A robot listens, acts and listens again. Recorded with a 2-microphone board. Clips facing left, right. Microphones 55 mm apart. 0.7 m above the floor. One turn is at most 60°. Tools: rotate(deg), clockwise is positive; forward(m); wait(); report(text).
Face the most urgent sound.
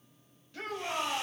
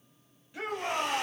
rotate(15)
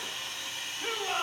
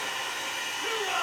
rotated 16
report("Found it: a shout, straight ahead.")